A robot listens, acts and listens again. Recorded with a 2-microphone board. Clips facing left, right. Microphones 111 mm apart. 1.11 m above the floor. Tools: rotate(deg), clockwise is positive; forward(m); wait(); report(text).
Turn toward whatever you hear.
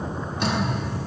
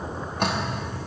rotate(50)
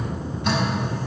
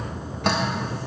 rotate(75)
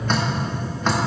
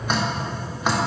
rotate(10)
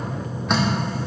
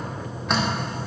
report("Facing the dripping.")